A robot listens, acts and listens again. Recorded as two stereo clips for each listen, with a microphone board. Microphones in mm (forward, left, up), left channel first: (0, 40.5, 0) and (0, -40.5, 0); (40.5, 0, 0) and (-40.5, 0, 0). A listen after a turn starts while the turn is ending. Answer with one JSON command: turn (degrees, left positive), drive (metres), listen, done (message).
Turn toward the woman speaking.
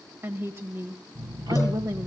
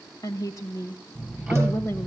{"turn": -50}
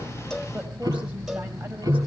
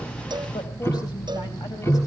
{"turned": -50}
{"listen": true}
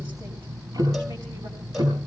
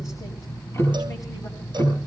{"listen": true}
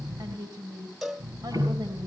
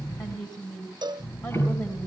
{"turn": -45}
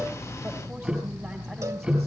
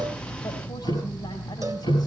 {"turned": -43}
{"listen": true}
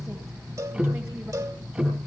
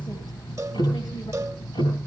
{"listen": true}
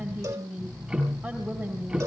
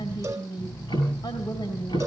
{"done": "Facing the woman speaking."}